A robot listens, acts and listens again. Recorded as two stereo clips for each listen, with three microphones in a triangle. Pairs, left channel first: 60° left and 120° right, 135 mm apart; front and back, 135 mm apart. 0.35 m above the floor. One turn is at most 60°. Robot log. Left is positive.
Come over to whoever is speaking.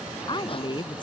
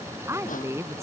note: The woman speaking: 110° left.
cmd yaw +60
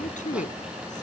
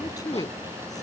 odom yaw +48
note: The woman speaking is now 60° left.
cmd yaw +60
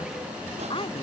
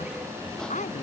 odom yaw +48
note: The woman speaking is now 15° left.
cmd yaw +15
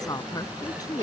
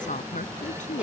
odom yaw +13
cmd fwd 1.0
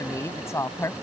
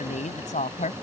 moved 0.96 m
cmd fwd 1.0
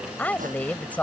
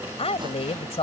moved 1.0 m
note: The woman speaking is now 15° right.
cmd yaw -15
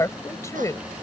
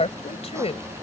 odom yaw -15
cmd fwd 1.0
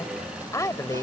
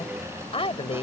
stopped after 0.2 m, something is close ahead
end: Arrived at the woman speaking, straight ahead.